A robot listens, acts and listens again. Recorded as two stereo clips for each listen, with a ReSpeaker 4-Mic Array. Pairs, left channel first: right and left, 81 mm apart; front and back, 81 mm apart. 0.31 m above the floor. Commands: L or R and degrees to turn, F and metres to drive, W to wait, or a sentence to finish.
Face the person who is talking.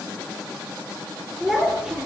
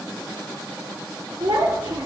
L170
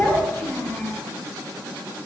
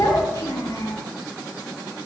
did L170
R30
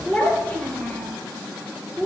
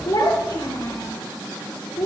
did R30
R20
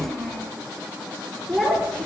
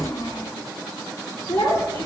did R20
Found it: a child speaking, straight ahead.